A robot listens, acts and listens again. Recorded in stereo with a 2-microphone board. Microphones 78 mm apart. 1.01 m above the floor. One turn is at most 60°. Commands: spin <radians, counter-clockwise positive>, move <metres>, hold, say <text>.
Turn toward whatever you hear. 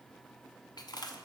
spin 1.05
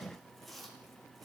say Found it: chewing, straight ahead, under 1 m away.